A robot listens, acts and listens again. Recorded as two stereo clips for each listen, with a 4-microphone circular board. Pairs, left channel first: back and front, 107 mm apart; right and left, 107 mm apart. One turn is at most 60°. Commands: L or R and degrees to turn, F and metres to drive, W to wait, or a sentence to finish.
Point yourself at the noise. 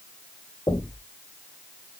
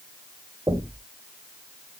L60
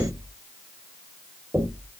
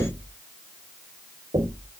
L60
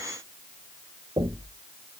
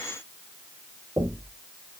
L35
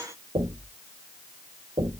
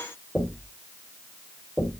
Found it: knocking, straight ahead.